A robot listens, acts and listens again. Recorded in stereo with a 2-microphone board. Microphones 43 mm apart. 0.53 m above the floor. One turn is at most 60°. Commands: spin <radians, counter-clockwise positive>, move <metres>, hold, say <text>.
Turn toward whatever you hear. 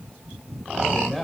spin 0.52
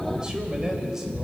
spin -0.17
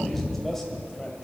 spin 0.17
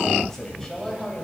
spin 0.26
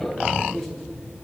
say Facing the man speaking.